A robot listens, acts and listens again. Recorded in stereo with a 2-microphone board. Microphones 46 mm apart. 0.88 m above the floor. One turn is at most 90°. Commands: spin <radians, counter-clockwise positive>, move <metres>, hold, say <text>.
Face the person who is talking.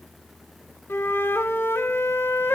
hold
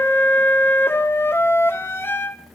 hold
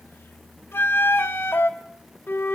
say I can't make out anyone speaking, only a flute.